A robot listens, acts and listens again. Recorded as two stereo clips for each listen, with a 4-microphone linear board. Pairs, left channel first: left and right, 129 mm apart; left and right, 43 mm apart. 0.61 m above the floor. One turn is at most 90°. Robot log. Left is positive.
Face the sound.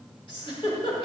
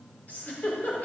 note: The giggle: about 45° left or 135° left.
cmd yaw +45
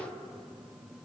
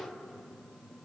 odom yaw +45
cmd idle
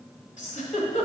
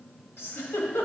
note: So it is at 90° left.
cmd yaw +90
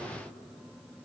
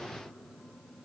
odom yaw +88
cmd idle
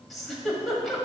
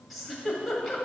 end: Found it: a giggle, straight ahead.